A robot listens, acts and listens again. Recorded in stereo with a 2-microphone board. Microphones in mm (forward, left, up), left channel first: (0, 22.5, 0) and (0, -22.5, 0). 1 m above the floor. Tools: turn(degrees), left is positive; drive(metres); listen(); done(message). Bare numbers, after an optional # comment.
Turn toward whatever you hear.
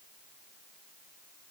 listen()
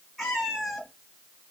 turn(30)
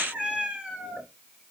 # So it is at 20° right.
turn(-20)
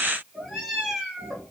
done("Facing the cat meowing.")